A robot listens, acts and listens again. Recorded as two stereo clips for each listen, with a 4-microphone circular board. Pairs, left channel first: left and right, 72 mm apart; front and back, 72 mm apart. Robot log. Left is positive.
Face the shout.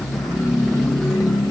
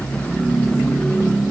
cmd idle
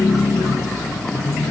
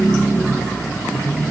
cmd idle
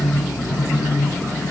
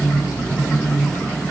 end: I can't make out a shout to turn to.